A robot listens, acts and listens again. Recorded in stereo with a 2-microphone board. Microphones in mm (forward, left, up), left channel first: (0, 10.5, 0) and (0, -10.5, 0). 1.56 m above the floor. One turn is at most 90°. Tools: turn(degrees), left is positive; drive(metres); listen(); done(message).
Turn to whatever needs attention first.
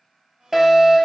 turn(degrees=-25)
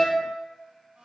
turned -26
done("Found it: a fire alarm, straight ahead, 1 to 2 m away.")